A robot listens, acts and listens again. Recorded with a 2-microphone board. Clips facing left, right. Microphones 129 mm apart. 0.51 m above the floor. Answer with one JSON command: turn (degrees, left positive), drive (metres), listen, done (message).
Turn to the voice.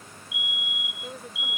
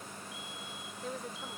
{"turn": 30}
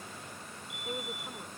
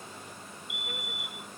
{"listen": true}
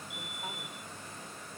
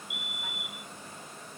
{"listen": true}
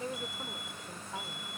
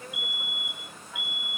{"turn": 145}
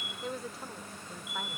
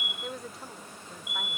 {"done": "Found it: a woman speaking, straight ahead."}